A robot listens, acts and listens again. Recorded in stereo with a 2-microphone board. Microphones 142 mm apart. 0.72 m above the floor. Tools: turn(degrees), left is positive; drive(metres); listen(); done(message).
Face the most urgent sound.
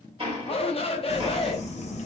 turn(degrees=40)
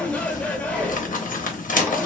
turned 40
turn(degrees=10)
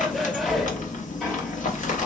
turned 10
listen()
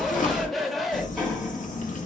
done("Facing the shout.")